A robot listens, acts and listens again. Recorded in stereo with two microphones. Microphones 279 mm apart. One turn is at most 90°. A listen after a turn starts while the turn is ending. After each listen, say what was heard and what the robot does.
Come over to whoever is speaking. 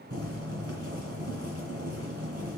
Keep listening.
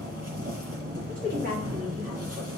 The woman speaking: about 30° right or 150° right. Turn 30° right.
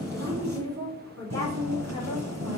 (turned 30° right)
So it is at 120° right. Turn 90° right.
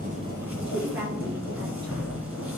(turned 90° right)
The woman speaking is now 40° right. Turn 40° right.
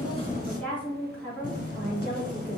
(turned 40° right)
Drive 1.0 m forward.
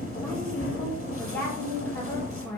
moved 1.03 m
Drive 1.0 m forward.
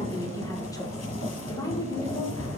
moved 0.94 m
The woman speaking is now 15° left. Turn 15° left.
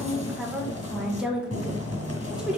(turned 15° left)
Drive 1.0 m forward.
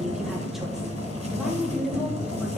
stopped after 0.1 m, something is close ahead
I am next to the woman speaking.